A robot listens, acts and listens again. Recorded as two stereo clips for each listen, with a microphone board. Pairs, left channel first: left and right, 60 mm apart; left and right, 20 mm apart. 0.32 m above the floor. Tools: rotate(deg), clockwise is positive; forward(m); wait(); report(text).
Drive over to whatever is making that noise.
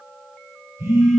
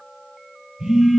rotate(55)
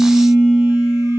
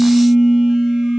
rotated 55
rotate(65)
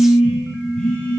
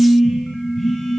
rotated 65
rotate(-20)
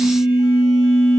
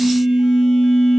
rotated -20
forward(1.0)
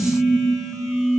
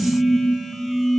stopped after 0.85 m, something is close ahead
report("I am next to the phone buzzing.")